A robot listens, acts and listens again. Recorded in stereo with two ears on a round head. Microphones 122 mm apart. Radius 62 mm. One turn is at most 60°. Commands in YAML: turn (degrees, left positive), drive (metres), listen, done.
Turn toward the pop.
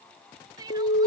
listen: true
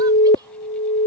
listen: true
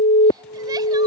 done: "I can't make out a pop, only crying and an alarm."